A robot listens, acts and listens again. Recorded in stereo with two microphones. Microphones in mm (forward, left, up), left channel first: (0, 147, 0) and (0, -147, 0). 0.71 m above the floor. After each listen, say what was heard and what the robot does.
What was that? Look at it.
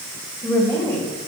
Turn 30° left.
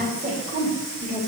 So it is at 20° right. Turn 20° right.
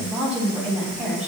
Found it: a woman speaking, straight ahead, over 4 m away.